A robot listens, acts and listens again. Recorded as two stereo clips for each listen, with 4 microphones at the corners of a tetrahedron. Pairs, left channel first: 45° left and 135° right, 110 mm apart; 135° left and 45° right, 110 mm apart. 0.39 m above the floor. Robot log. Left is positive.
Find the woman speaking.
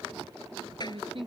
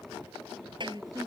note: The woman speaking: 100° right.
cmd yaw -100
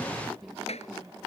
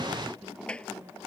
cmd idle
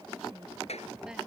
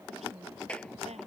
note: The woman speaking is now 50° right.
cmd yaw -50
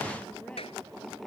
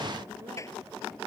cmd idle
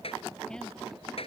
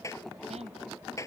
cmd idle
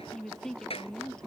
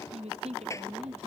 note: The woman speaking is now 40° right.
cmd yaw -40
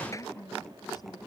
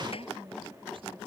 note: The woman speaking is now 10° right.
cmd yaw -10
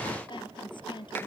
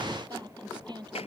end: Found it: a woman speaking, straight ahead.